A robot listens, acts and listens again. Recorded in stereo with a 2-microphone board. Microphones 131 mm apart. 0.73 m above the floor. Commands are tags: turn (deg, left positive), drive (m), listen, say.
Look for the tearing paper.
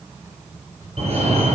<listen/>
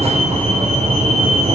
<listen/>
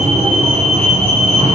<say>I can't make out tearing paper, only a fire alarm.</say>